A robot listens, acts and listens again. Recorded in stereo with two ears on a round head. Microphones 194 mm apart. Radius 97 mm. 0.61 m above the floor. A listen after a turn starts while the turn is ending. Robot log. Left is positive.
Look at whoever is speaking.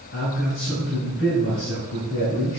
note: The man speaking: about 55° left or 125° left.
cmd yaw +55
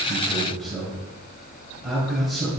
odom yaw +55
end: Found it: a man speaking, straight ahead, 2 to 4 m away.